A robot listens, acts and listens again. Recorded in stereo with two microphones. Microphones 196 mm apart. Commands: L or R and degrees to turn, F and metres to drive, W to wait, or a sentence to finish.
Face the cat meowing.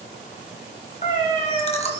L35
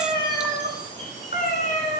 L40
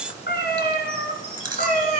L40
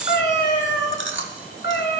L110
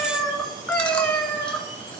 Found it: a cat meowing, straight ahead.